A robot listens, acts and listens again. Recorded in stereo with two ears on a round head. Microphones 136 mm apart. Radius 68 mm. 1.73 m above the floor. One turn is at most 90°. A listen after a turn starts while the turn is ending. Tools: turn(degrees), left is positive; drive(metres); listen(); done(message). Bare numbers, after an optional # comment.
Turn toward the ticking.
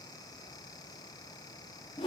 listen()
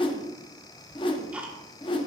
turn(-30)
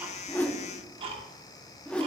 # So it is at 140° right.
turn(-90)
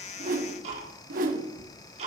# The ticking is now 50° right.
turn(-50)
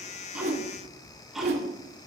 done("Found it: ticking, straight ahead, 1 to 2 m away.")